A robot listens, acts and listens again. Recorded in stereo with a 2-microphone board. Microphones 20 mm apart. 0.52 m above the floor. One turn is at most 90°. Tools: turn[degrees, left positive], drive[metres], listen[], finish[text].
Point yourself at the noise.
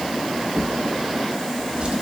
Thought: The drawer: about 50° right or 130° right.
Action: turn[-50]
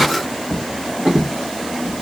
Thought: So it is at 80° right.
Action: turn[-80]
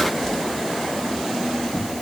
Action: finish[Found it: a drawer, straight ahead.]